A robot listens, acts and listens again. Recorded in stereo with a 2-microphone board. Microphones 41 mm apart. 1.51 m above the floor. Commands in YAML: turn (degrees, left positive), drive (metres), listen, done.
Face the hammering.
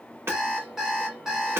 turn: -70
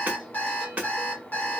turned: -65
turn: -40
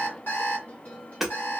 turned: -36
done: "Facing the hammering."